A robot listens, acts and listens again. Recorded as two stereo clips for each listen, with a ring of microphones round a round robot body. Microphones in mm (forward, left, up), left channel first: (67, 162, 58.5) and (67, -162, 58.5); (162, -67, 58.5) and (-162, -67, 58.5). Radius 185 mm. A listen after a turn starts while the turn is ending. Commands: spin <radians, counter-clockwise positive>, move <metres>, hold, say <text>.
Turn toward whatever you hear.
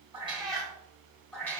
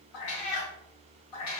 say Found it: a cat meowing, straight ahead.